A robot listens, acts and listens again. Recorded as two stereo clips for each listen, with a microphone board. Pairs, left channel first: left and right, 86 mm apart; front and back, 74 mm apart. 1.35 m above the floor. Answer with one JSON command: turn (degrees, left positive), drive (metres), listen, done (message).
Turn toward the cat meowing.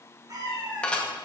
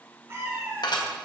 {"turn": -125}
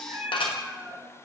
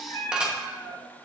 {"turn": -15}
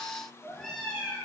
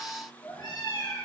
{"turn": 15}
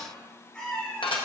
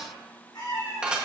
{"turn": 15}
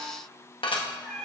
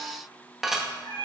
{"turn": 10}
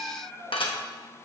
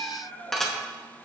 {"done": "Found it: a cat meowing, straight ahead, 2 to 4 m away."}